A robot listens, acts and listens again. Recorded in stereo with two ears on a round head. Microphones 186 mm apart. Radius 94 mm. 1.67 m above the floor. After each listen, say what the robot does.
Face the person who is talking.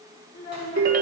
Turn 45° left.
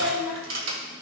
Facing the child speaking, over 4 m away.